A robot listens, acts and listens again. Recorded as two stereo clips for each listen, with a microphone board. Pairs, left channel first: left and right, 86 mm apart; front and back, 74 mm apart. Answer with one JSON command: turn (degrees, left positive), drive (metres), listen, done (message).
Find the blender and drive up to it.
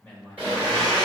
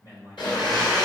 {"turn": -15}
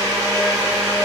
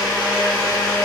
{"drive": 1.0}
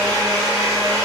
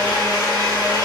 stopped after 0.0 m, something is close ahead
{"done": "Something is in my way. I am facing the blender but have not reached it."}